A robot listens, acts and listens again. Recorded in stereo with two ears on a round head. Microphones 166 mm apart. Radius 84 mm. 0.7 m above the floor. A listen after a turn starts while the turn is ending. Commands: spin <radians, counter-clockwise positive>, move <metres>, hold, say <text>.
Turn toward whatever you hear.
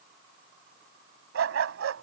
spin -1.57
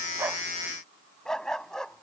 say Facing the dog barking.